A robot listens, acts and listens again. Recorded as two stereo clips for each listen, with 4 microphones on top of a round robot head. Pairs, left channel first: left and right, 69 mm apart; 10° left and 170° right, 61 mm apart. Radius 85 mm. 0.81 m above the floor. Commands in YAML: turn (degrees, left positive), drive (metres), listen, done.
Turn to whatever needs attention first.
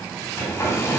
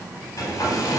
listen: true
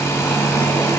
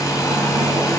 listen: true
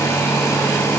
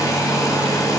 done: "I can't make out anything urgent to turn to."